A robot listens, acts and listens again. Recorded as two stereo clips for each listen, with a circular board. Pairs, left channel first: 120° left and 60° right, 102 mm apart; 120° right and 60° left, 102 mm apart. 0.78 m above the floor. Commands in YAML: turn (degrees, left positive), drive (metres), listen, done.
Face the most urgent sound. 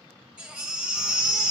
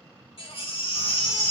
turn: -140
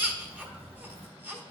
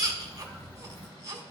turn: 15
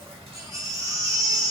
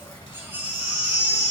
done: "Facing the baby crying."